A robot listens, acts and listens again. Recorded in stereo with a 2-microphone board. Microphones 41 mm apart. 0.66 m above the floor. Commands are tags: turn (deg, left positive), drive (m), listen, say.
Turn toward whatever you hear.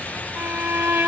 <turn deg="-90"/>
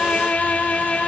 <turn deg="10"/>
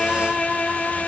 <say>Facing the violin.</say>